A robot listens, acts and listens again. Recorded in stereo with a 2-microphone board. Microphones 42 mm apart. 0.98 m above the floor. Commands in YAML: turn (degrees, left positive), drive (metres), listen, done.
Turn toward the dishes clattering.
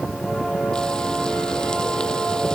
listen: true
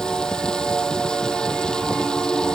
listen: true
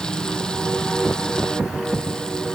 done: "I can't make out dishes clattering to turn to."